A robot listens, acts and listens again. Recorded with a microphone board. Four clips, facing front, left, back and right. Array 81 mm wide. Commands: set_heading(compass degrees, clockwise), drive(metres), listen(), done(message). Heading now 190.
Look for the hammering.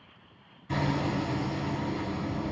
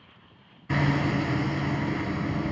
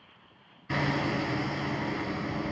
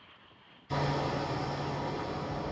set_heading(80)
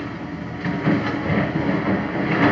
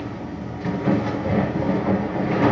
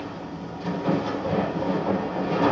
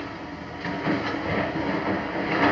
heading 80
set_heading(100)
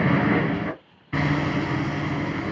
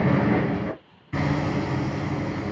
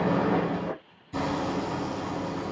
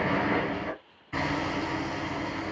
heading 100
done("Found it: hammering, straight ahead.")